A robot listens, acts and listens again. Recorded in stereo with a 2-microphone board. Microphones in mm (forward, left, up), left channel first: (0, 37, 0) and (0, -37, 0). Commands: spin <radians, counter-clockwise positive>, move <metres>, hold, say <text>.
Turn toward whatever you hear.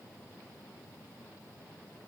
hold
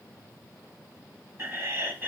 spin -0.52
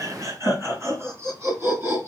spin -0.61
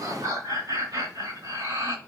spin -2.01
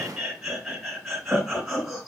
say Facing the laughter, 2 to 4 m away.